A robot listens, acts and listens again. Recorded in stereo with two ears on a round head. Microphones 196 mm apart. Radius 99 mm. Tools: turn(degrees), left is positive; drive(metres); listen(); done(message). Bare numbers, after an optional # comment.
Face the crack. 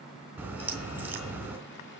turn(-30)
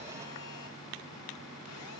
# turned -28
listen()
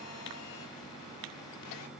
done("I heard a crack, but can't make it out now. It was about 20° left or 140° right.")